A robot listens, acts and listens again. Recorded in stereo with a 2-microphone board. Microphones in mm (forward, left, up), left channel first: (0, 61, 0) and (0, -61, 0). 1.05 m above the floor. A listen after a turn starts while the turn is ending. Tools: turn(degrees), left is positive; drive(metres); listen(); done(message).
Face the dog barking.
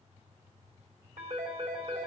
listen()
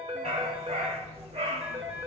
turn(degrees=-55)
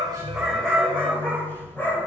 turn(degrees=20)
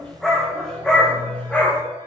turn(degrees=10)
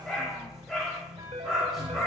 done("Found it: a dog barking, straight ahead.")